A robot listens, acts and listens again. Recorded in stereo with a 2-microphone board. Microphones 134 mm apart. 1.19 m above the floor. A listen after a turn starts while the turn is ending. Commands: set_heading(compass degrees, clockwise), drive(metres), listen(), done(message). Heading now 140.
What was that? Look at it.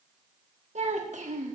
set_heading(205)
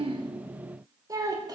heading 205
set_heading(235)
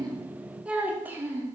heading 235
set_heading(250)
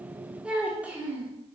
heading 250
set_heading(265)
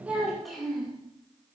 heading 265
done("Found it: a child speaking, straight ahead.")